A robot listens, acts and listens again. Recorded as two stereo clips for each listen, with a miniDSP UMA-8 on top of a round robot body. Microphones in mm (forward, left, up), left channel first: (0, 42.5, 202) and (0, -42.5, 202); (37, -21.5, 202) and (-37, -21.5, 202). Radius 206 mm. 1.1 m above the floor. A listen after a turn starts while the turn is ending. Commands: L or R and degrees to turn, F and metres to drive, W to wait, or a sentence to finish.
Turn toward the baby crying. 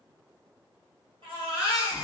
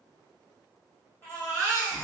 R55
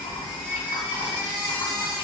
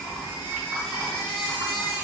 R20
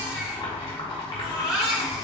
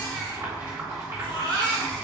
Found it: a baby crying, straight ahead.